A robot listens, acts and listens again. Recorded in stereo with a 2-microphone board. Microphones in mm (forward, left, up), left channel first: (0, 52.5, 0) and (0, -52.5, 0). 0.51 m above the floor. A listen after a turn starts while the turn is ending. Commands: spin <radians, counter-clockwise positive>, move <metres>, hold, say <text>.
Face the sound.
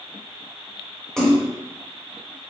spin 0.52
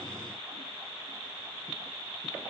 hold
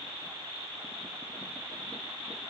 say I heard a splash, but can't make it out now. It was about 25° right or 145° left.